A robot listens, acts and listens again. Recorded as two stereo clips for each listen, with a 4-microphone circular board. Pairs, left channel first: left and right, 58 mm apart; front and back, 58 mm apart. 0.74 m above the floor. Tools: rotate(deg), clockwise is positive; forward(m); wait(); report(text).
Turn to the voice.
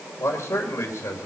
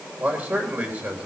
rotate(-130)
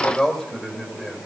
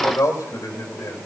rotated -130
rotate(-15)
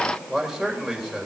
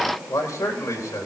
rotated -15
report("Found it: a man speaking, straight ahead.")